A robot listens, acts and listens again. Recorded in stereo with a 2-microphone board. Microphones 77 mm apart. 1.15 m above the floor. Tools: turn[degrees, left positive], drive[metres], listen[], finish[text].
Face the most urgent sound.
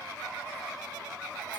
Action: listen[]
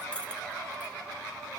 Action: listen[]
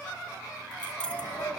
Action: turn[90]
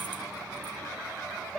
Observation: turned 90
Thought: So it is at 10° right.
Action: turn[-10]
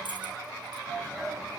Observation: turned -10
Action: finish[Facing the shout.]